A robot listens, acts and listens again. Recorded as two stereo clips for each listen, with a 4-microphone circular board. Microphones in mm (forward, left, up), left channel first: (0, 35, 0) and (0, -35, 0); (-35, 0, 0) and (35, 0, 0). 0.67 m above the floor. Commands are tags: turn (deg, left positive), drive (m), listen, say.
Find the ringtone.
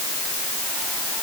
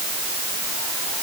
<listen/>
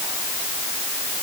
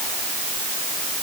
<listen/>
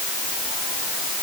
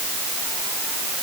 <say>I can't make out a ringtone.</say>